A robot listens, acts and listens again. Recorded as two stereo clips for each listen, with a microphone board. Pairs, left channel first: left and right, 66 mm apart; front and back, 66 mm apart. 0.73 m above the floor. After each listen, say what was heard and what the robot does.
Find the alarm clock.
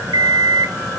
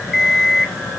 The alarm clock: 95° right. Turn 95° right.
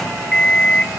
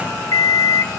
The alarm clock is now 10° left. Turn 10° left.
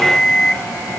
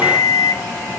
Found it: an alarm clock, straight ahead, 2 to 4 m away.